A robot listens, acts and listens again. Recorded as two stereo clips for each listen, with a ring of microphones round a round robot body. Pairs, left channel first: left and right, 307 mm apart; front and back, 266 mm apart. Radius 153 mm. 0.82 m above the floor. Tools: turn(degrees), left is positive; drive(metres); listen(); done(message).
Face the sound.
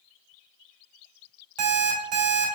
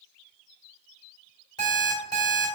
turn(degrees=-75)
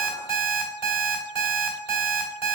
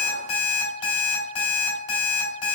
done("Found it: an alarm clock, straight ahead, 2 to 4 m away.")